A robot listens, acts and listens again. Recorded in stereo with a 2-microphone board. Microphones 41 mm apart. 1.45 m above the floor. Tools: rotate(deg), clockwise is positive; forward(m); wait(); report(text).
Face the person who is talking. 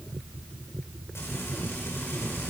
wait()
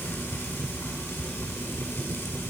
wait()
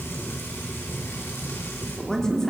rotate(-15)
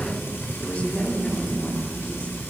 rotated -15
rotate(-145)
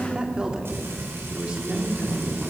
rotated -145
rotate(25)
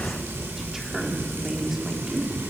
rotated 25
rotate(10)
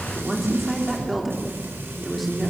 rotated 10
report("Facing the woman speaking, 2 to 4 m away.")